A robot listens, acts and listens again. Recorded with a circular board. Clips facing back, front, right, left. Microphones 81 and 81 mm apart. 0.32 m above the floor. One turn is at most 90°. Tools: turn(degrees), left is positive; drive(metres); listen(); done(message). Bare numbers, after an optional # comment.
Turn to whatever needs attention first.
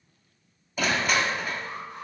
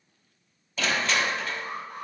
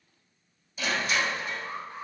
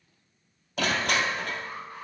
# The alarm: 30° right.
turn(-30)
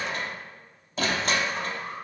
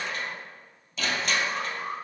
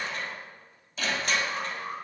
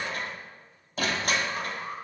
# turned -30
done("Found it: an alarm, straight ahead.")